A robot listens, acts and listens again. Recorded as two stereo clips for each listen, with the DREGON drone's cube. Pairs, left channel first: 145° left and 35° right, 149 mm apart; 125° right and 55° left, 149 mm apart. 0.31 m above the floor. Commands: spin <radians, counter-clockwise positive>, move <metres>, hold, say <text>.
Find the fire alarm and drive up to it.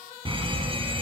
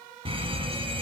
spin 0.17
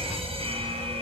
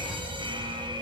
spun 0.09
move 1.0
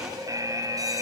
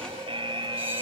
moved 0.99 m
spin 0.35
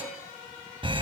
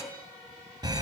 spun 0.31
move 1.0
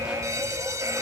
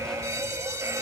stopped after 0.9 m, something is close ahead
spin 0.17
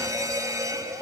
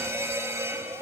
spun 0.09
say Arrived at the fire alarm, straight ahead.